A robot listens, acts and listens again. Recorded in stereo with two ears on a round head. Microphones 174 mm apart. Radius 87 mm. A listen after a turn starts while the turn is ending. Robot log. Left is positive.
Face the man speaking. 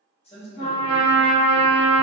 note: The man speaking: about 35° left or 145° left.
cmd yaw +35
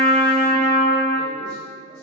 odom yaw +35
cmd idle
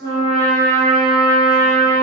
cmd idle
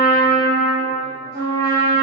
end: I heard a man speaking, but can't make it out now. It was about straight ahead or 110° left.